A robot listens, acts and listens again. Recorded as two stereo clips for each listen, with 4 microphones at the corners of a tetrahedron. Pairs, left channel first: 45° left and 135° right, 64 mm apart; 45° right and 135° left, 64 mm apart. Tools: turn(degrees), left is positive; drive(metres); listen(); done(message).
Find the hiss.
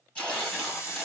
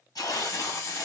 done("Found it: a hiss, straight ahead, 1 to 2 m away.")